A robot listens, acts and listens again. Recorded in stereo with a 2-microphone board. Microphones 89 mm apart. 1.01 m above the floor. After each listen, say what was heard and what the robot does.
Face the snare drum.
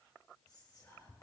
Keep listening.
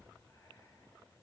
Keep listening.
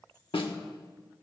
Turn 90° left.
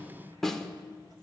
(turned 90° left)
Facing the snare drum.